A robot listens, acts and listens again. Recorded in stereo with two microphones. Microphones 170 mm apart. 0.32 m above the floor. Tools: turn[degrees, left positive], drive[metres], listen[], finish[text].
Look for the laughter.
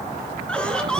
Action: turn[30]
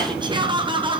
Thought: So it is at 30° right.
Action: turn[-30]
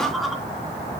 Action: finish[Found it: laughter, straight ahead.]